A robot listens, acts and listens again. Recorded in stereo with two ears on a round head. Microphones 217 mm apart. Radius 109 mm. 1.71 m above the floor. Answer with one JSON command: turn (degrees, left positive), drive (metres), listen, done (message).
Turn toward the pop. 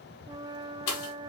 {"turn": 90}
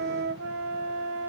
{"done": "Facing where the pop came from. I can't hear it now."}